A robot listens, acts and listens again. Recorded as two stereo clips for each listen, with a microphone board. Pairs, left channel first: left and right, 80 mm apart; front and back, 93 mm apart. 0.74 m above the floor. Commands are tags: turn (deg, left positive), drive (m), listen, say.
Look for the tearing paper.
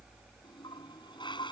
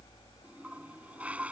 <listen/>
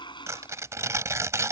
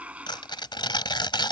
<turn deg="-35"/>
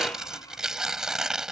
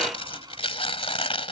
<say>Found it: tearing paper, straight ahead.</say>